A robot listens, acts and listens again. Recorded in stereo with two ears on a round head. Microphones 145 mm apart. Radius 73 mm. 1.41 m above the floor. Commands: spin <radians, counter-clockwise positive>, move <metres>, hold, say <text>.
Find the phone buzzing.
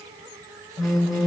spin 0.52
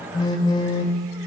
spin 2.62
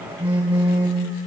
spin -0.17
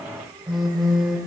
say Facing the phone buzzing, 1 to 2 m away.